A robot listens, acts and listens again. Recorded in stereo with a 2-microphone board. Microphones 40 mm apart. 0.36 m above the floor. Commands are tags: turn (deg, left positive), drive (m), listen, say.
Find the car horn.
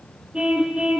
<turn deg="-25"/>
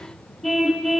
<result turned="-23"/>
<say>Found it: a car horn, straight ahead.</say>